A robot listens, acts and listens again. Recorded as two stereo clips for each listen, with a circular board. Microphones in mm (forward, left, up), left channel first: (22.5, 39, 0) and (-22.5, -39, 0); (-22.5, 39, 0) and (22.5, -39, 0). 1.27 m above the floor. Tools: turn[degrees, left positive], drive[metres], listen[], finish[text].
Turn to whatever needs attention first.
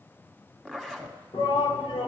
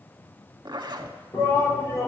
Thought: The shout: 65° left.
Action: turn[65]
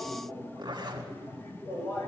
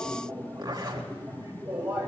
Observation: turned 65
Action: finish[Facing the shout.]